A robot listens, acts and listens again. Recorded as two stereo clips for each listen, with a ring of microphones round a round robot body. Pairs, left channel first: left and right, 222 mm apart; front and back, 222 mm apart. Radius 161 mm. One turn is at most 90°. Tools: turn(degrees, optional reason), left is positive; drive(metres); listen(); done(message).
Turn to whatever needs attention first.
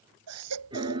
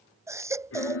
turn(degrees=-90, reason="The baby crying: 100° right.")
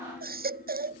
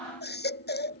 turn(degrees=-40, reason="The baby crying is now 40° right.")
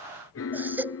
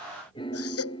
turn(degrees=-10, reason="The baby crying is now 10° right.")
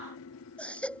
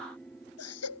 done("Found it: a baby crying, straight ahead.")